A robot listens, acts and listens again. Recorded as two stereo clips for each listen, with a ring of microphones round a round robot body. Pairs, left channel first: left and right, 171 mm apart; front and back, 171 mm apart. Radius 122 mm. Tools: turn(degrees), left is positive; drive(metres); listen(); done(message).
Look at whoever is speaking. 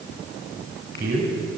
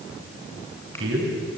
turn(degrees=-145)
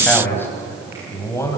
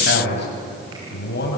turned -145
turn(degrees=15)
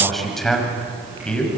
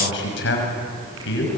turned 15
done("Facing the man speaking, over 4 m away.")